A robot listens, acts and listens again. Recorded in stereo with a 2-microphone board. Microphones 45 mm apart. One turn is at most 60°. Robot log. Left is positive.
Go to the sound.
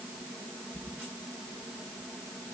cmd idle
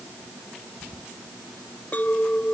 note: The clink: about 35° left or 145° left.
cmd yaw +35
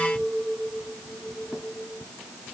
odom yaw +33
cmd fwd 1.0
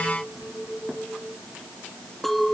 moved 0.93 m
cmd fwd 1.0
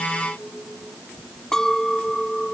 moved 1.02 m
note: The clink is now 10° left.
cmd yaw +10
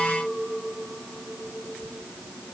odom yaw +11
cmd fwd 1.0
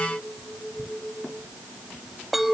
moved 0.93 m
cmd fwd 1.0
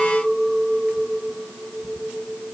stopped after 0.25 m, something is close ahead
note: The clink is now 10° right.
cmd yaw -10
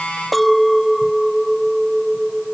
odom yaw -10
end: Arrived at the clink, straight ahead.